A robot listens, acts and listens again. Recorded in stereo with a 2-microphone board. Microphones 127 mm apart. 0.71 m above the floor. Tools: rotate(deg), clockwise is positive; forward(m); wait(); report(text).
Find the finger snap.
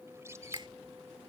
rotate(40)
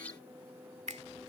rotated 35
rotate(100)
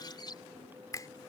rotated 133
rotate(-30)
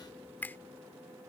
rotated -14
rotate(-15)
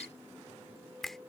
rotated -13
report("Facing the finger snap.")